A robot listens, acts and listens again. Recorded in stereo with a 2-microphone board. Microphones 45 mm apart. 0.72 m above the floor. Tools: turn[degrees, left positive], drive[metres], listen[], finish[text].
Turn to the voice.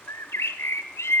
Action: listen[]
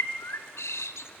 Action: listen[]
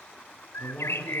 Thought: The man speaking: about 25° left or 155° left.
Action: turn[25]
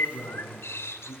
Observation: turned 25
Thought: So it is at 130° left.
Action: turn[130]
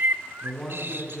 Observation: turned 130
Action: finish[Found it: a man speaking, straight ahead, over 4 m away.]